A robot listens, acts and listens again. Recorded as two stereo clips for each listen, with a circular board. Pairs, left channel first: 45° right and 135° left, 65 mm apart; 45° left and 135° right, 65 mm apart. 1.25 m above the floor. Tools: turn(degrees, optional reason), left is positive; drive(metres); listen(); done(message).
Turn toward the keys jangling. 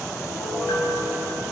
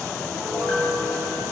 listen()
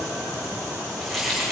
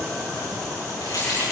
turn(degrees=40, reason="The keys jangling: 40° left.")
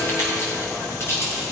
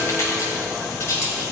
done("Facing the keys jangling.")